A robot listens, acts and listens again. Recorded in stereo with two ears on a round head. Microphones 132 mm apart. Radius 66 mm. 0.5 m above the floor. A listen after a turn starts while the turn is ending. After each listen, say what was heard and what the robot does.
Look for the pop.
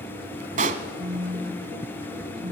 The pop: about 55° right or 125° right. Turn 55° right.
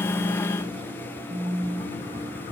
Keep listening.
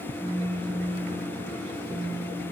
I heard a pop, but can't make it out now. It was about straight ahead or 70° right.